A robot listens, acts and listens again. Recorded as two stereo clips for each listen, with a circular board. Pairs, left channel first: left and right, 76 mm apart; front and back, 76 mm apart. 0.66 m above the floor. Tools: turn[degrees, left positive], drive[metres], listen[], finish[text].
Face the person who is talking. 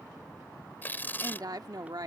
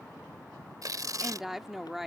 Thought: The woman speaking: 95° right.
Action: turn[-95]
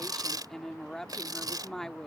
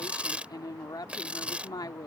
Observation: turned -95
Action: finish[Facing the woman speaking.]